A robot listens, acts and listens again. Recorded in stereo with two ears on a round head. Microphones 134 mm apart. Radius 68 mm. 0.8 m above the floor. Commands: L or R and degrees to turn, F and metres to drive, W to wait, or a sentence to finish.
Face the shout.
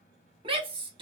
R35
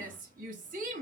R105
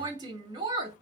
R30
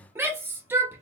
R15
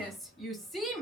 Found it: a shout, straight ahead, 1 to 2 m away.